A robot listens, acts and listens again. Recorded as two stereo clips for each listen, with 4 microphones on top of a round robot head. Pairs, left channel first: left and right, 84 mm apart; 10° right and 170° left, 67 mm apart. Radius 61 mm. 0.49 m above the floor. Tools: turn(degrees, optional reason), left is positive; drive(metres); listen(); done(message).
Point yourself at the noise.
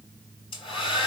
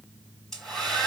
turn(degrees=75, reason="The hair dryer: 75° left.")
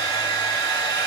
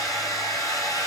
turn(degrees=25, reason="The hair dryer is now 25° left.")
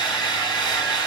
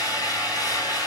turn(degrees=10, reason="The hair dryer is now 10° left.")
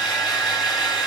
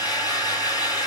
done("Facing the hair dryer.")